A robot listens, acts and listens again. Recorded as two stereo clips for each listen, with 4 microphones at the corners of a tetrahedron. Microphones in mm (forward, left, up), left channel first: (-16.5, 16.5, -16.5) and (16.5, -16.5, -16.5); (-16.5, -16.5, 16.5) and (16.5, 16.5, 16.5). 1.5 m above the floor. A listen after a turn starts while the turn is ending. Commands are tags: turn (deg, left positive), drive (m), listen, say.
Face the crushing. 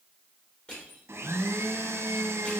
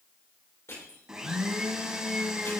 <turn deg="-155"/>
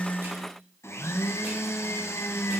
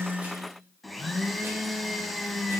<listen/>
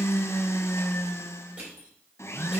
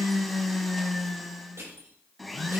<turn deg="10"/>
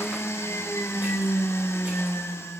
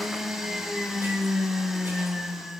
<listen/>
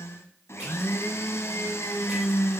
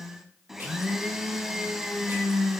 <listen/>
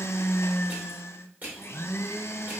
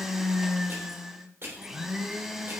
<say>Facing the crushing, 2 to 4 m away.</say>